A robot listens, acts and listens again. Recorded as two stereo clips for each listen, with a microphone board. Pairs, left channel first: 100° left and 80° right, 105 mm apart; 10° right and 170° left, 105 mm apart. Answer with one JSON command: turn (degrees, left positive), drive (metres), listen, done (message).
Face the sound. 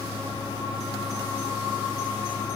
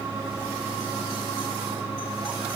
{"listen": true}
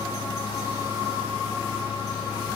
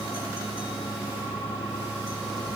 {"listen": true}
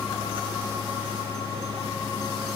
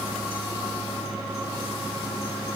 {"done": "I can't make out anything."}